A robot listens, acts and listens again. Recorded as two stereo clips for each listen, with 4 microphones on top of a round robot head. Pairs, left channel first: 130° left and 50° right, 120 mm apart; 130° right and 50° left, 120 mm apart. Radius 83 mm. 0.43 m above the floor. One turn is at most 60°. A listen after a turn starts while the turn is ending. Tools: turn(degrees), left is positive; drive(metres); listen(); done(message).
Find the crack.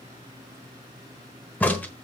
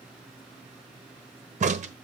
turn(degrees=55)
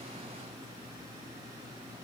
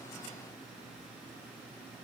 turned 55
done("I heard a crack from this way, but can't make it out now.")